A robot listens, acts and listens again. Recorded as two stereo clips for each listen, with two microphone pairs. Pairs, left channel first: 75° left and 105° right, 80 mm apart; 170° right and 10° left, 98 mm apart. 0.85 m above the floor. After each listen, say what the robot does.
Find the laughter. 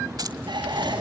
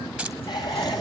Turn 125° right.
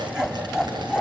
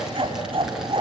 Turn 20° right.
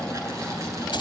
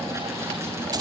Keep listening.
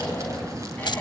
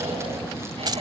Keep listening.
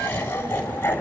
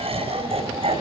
Turn 10° left.
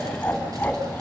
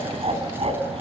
Found it: laughter, straight ahead.